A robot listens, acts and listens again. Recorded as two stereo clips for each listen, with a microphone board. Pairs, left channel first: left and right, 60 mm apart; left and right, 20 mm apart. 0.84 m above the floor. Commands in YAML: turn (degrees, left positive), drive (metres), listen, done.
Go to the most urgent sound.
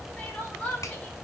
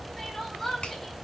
turn: 25
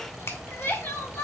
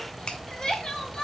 turn: 130
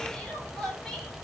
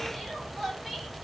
drive: 1.0
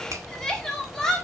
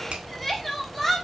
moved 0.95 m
turn: 10
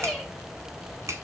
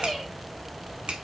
listen: true
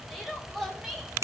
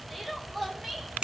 drive: 1.0
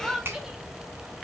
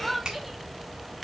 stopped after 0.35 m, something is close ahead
turn: -10
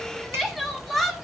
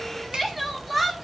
done: "Arrived at the crying, straight ahead."